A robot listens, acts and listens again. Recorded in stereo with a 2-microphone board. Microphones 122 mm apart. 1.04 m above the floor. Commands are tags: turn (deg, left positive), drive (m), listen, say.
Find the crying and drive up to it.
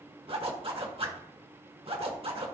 <listen/>
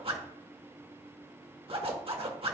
<listen/>
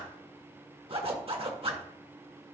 <say>I can't make out crying to turn to.</say>